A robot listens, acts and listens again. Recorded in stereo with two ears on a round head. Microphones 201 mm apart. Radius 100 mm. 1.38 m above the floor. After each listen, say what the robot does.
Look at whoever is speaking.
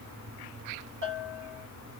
Keep listening.
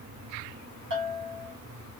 Keep listening.
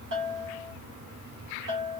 I can't make out anyone speaking to turn to.